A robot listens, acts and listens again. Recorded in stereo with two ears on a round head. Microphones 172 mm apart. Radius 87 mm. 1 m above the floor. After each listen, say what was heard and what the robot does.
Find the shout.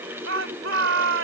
The shout: about 70° right or 110° right. Turn 70° right.
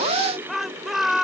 Facing the shout.